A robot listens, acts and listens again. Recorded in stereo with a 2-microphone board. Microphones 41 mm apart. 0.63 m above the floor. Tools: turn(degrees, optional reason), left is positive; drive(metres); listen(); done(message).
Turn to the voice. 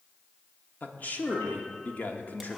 turn(degrees=45, reason="The man speaking: about 45° left or 135° left.")
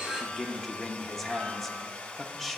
turn(degrees=10, reason="So it is at 10° left.")
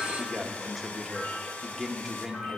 done("Facing the man speaking, 1 to 2 m away.")